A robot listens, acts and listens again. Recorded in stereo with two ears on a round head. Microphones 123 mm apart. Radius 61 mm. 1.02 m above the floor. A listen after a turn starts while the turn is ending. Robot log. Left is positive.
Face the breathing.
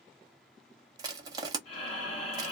note: The breathing: about 45° left or 135° left.
cmd yaw +45
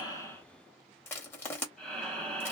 end: Found it: breathing, straight ahead.